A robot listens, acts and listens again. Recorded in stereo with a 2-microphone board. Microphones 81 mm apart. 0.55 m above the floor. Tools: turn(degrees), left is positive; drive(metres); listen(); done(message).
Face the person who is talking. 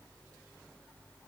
listen()
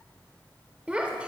turn(degrees=-30)
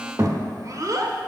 turn(degrees=-135)
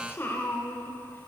turn(degrees=30)
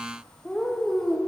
turn(degrees=10)
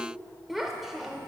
done("Facing the child speaking, under 1 m away.")